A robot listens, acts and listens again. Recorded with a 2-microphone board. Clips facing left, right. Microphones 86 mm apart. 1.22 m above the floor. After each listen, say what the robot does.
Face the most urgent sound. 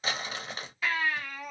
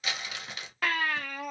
Turn 55° right.
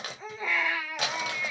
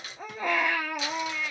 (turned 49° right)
Turn 65° right.
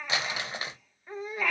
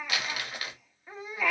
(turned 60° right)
Facing the baby crying, under 1 m away.